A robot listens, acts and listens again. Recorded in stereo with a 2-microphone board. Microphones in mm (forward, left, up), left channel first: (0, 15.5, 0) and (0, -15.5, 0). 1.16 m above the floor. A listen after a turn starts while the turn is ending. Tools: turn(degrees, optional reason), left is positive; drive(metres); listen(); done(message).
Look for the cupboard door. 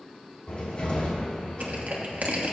turn(degrees=40, reason="The cupboard door: about 40° left or 140° left.")
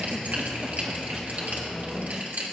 done("Facing the cupboard door, 2 to 4 m away.")